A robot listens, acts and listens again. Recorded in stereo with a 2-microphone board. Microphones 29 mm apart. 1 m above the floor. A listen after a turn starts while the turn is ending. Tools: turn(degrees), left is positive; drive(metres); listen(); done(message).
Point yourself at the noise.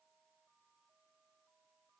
listen()
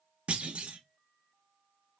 turn(degrees=-45)
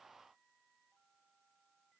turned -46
listen()
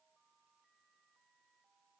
done("I heard a clunk, but can't make it out now. It was about straight ahead or 90° right.")